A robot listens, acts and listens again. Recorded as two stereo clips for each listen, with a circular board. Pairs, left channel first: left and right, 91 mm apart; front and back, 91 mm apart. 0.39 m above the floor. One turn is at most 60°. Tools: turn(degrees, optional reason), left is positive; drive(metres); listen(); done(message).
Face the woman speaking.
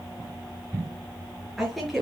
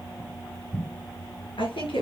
done("Facing the woman speaking.")